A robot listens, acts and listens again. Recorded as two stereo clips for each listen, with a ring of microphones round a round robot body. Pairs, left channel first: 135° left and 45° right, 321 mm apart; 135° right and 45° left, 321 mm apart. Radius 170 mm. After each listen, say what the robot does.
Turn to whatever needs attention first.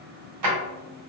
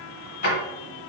Keep listening.
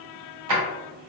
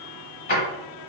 Keep listening.
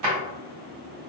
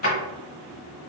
I can't make out anything urgent to turn to.